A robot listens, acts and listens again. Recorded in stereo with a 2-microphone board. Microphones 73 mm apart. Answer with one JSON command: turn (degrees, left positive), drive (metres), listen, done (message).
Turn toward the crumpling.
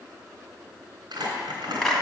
{"turn": -70}
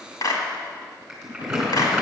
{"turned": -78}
{"turn": -10}
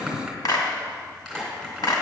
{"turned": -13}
{"done": "Found it: crumpling, straight ahead, 2 to 4 m away."}